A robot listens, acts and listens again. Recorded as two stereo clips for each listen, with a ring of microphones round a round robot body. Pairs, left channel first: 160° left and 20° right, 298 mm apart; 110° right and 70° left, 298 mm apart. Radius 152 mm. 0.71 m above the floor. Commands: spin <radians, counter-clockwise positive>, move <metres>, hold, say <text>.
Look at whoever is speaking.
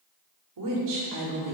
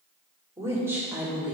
spin -0.35
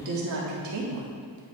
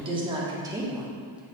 spin -0.26
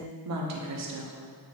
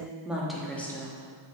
spin -0.61
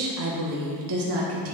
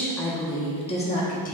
spin -0.96
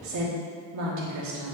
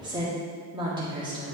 say Found it: a woman speaking, straight ahead, 1 to 2 m away.